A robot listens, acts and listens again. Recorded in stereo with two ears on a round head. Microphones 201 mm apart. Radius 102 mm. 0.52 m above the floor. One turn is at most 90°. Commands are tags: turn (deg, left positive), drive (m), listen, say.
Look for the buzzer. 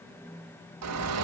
<listen/>
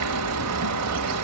<listen/>
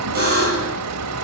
<turn deg="-45"/>
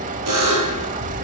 <turn deg="-90"/>
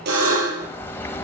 <turn deg="-45"/>
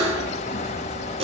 <turn deg="-25"/>
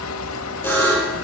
<turn deg="10"/>
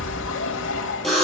<say>Found it: a buzzer, straight ahead, over 4 m away.</say>